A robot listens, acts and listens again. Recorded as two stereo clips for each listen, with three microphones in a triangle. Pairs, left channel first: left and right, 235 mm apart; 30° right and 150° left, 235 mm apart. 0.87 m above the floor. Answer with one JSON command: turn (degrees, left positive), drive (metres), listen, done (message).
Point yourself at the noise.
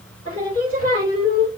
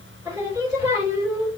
{"turn": 75}
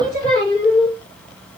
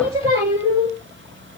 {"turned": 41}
{"turn": 35}
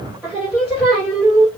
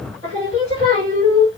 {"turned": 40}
{"done": "Found it: singing, straight ahead, 1 to 2 m away."}